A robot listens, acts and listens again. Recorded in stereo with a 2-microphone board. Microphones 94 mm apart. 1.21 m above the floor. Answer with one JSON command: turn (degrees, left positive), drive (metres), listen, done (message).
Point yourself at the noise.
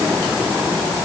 {"listen": true}
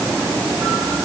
{"listen": true}
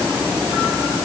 {"done": "I can't make out anything."}